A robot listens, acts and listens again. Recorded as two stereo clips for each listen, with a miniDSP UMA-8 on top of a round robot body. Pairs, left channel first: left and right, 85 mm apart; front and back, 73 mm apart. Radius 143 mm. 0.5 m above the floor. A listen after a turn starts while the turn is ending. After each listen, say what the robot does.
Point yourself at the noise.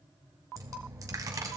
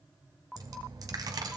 Turn 145° right.
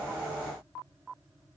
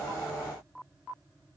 I heard a dropped coin from this way, but can't make it out now.